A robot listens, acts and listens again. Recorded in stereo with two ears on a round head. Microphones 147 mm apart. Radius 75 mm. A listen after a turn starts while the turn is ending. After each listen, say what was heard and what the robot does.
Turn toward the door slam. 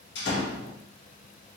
The door slam: about 75° left or 105° left. Turn 75° left.
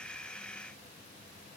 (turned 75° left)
Keep listening.
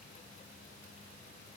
I heard a door slam, but can't make it out now. It was about straight ahead or 30° left.